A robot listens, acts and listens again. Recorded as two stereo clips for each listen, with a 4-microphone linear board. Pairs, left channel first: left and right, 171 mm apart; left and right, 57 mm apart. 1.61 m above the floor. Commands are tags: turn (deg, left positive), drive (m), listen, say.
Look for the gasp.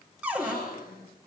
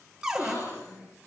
<turn deg="65"/>
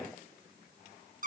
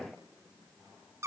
<listen/>
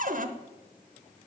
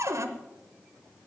<say>I heard a gasp, but can't make it out now. It was about straight ahead or 50° left.</say>